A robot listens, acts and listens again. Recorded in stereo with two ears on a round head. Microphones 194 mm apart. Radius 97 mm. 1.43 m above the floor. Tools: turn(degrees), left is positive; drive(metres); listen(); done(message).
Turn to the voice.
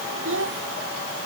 turn(degrees=-60)
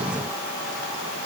listen()
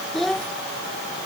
done("Found it: a child speaking, straight ahead.")